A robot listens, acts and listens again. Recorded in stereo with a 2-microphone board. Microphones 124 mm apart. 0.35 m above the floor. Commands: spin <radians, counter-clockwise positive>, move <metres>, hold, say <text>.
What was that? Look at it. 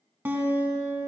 spin -0.26
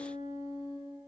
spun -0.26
spin -2.62
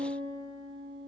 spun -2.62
spin -0.70
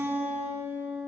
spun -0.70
spin -0.35
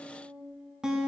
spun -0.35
say Facing the guitar, 1 to 2 m away.